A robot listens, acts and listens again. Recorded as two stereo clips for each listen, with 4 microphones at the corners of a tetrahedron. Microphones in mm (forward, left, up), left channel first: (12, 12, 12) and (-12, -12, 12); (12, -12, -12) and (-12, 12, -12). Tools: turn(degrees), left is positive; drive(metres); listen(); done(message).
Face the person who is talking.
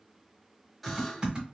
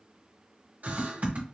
listen()
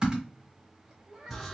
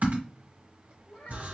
turn(degrees=-80)
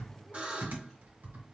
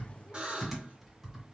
listen()
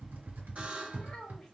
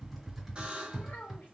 turn(degrees=-25)
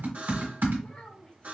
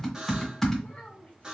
turn(degrees=-15)
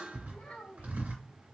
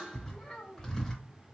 done("Found it: a child speaking, straight ahead, 2 to 4 m away.")